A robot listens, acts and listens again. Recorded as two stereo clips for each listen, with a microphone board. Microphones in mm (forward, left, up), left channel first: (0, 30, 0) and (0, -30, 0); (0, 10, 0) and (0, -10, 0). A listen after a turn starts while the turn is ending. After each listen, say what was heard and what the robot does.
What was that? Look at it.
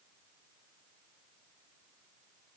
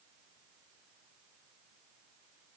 Keep listening.
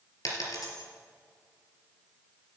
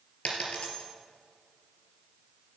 The dropped coin: about 75° left or 105° left. Turn 75° left.
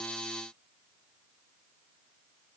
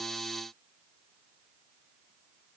Keep listening.
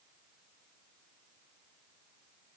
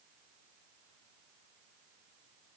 I heard a dropped coin, but can't make it out now. It was about straight ahead or 30° left.